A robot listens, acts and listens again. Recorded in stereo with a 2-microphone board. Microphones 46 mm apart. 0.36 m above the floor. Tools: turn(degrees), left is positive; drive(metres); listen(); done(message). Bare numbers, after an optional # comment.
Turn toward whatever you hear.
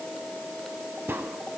# The crack: about 55° right or 125° right.
turn(-55)
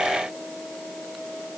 listen()
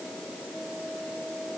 done("I heard a crack, but can't make it out now. It was about straight ahead or 70° right.")